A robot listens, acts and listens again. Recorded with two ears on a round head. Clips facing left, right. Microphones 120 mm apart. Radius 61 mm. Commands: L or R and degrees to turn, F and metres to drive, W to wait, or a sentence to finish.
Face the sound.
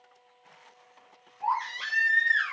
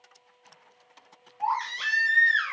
R70
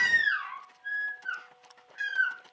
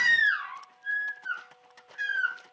Facing the baby crying, 2 to 4 m away.